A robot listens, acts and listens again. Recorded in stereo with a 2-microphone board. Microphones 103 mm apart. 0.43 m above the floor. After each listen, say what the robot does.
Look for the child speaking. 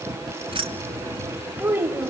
Turn 20° right.
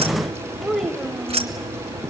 Facing the child speaking, 1 to 2 m away.